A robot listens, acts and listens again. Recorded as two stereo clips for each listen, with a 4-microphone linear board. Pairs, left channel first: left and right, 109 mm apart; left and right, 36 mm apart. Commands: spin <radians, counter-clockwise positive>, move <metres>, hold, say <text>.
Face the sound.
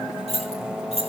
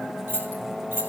spin -1.22
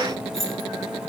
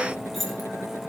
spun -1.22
say Found it: keys jangling, straight ahead, over 4 m away.